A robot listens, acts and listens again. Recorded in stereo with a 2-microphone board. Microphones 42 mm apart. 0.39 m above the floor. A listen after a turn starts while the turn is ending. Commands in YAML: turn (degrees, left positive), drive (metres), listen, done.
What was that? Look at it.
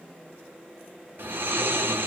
turn: -55
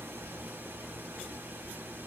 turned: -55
turn: -70
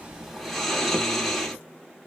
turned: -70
done: "Facing the snoring."